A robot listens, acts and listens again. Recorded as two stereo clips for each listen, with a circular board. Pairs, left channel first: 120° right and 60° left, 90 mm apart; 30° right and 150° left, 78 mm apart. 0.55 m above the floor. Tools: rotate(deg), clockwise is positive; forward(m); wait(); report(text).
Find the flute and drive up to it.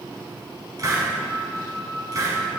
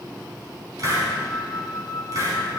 rotate(65)
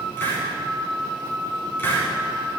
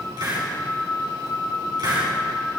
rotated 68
forward(1.0)
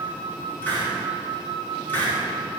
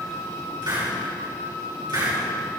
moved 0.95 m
forward(1.0)
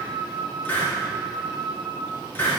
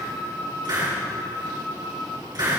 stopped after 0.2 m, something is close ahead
report("I am next to the flute.")